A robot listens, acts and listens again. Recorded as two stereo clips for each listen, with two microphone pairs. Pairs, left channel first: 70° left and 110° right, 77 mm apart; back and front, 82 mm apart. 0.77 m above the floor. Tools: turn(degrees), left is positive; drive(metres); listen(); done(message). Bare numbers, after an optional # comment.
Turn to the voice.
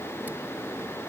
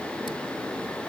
listen()
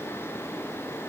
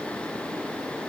listen()
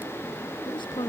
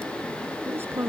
# The woman speaking: 60° left.
turn(60)
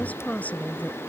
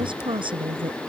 done("Facing the woman speaking.")